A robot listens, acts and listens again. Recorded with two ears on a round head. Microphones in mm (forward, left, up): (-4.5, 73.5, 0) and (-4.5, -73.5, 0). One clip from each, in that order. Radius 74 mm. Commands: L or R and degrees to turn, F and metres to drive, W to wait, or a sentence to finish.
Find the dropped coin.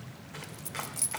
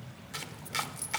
L20
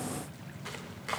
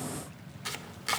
W
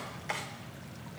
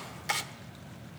I heard a dropped coin, but can't make it out now. It was about straight ahead or 140° left.